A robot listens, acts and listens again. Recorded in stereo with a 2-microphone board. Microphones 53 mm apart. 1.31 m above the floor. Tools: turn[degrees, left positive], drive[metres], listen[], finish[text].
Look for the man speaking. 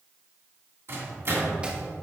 Action: listen[]
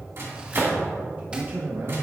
Thought: The man speaking: about 50° right or 130° right.
Action: turn[-50]
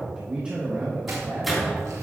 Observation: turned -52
Thought: So it is at 35° right.
Action: turn[-35]
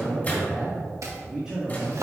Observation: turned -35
Thought: The man speaking is now 15° right.
Action: turn[-15]
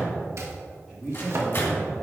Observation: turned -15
Action: finish[Found it: a man speaking, straight ahead, 2 to 4 m away.]